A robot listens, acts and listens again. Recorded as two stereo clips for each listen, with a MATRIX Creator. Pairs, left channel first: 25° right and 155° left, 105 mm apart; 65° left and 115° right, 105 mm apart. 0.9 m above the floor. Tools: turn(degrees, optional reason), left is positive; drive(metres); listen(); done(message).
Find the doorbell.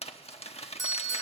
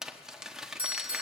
turn(degrees=-80, reason="The doorbell: 80° right.")
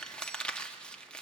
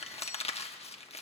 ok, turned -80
listen()
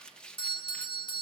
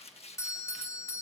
done("Facing the doorbell.")